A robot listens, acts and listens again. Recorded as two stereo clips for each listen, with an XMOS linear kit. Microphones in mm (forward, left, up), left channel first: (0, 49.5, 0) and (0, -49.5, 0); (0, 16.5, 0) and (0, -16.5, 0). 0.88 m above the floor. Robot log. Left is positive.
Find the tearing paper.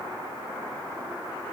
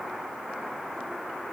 cmd idle
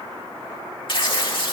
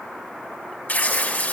note: The tearing paper: about 55° left or 125° left.
cmd yaw +55
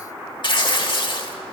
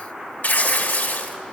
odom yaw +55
note: So it is at 60° left.
cmd yaw +60
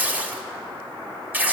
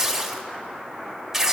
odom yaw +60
note: The tearing paper is now 20° right.
cmd yaw -20
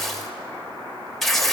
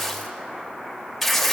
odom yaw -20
end: Facing the tearing paper.